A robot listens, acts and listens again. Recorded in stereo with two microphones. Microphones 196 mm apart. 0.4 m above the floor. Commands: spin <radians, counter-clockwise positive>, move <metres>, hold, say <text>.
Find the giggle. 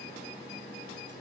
hold
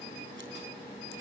hold
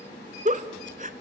spin -0.70
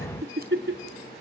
spin -1.66
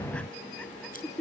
say Found it: a giggle, straight ahead, 1 to 2 m away.